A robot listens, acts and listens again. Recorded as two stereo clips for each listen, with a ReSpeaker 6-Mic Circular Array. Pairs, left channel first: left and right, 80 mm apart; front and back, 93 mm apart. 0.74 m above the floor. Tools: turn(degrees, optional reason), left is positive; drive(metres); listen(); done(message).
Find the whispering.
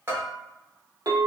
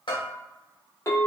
listen()
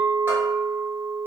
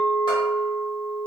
listen()
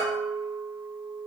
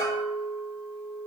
done("I can't make out whispering, only a bell and a clink.")